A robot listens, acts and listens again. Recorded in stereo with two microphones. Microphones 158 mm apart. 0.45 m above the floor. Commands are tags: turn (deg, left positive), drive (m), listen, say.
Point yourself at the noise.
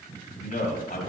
<turn deg="60"/>
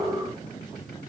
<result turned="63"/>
<listen/>
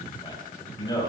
<turn deg="25"/>
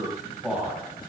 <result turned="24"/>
<turn deg="-10"/>
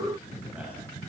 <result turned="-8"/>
<listen/>
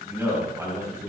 <turn deg="-20"/>
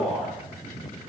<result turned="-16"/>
<say>Found it: a man speaking, straight ahead, 2 to 4 m away.</say>